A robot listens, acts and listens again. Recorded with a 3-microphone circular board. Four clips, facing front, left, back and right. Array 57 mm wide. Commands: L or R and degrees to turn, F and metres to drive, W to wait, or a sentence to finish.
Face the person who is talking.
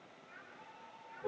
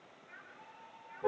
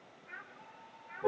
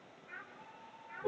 R165
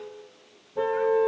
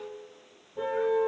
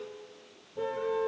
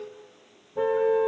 W
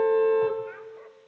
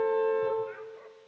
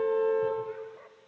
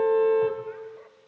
W
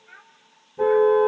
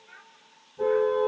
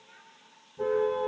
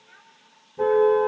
Facing the child speaking.